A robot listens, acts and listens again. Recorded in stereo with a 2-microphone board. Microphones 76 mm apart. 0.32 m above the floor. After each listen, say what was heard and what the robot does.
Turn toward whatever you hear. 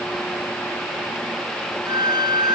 Turn 90° right.
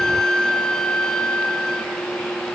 So it is at 10° left. Turn 10° left.
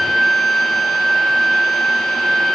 Found it: a violin, straight ahead, 1 to 2 m away.